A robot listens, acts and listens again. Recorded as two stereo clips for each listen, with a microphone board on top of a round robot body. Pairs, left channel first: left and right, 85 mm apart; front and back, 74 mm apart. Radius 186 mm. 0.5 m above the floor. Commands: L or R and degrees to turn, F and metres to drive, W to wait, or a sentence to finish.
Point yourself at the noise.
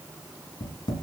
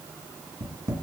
L130
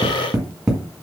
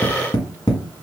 R10
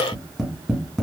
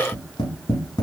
Found it: tapping, straight ahead, 1 to 2 m away.